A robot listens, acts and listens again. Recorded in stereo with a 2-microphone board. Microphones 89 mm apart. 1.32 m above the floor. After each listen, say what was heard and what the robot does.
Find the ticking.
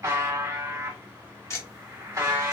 The ticking: about 35° left or 145° left. Turn 35° left.
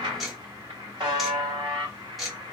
Found it: ticking, straight ahead.